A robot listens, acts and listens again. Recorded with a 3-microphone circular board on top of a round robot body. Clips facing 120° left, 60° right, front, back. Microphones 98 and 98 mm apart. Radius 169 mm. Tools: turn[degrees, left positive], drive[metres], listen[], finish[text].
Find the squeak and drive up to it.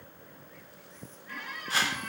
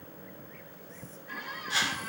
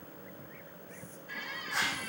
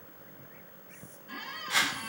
Thought: The squeak: 140° right.
Action: turn[-140]
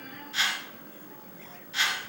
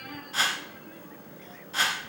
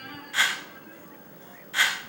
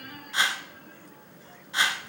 Thought: The squeak is now 60° right.
Action: turn[-60]
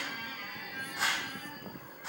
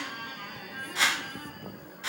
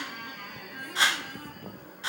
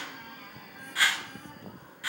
Thought: The squeak is now 15° right.
Action: turn[-15]
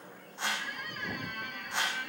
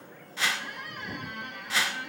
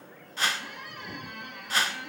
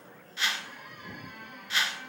Action: drive[1.0]
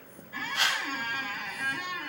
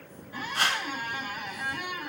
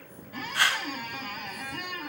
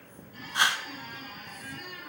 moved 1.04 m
Thought: The squeak is now 15° left.
Action: turn[15]
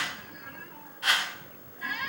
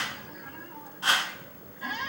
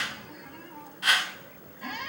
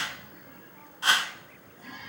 Action: drive[1.0]
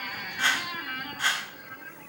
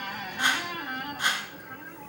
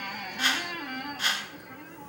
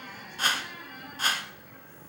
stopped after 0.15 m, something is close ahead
Action: finish[I am next to the squeak.]